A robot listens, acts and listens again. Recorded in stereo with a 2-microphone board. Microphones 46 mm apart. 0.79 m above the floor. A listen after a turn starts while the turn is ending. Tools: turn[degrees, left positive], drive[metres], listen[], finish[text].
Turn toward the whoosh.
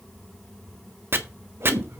Thought: The whoosh: about 60° right or 120° right.
Action: turn[-60]
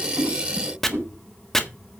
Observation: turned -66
Thought: So it is at 55° right.
Action: turn[-55]
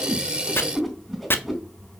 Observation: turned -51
Action: finish[Facing the whoosh.]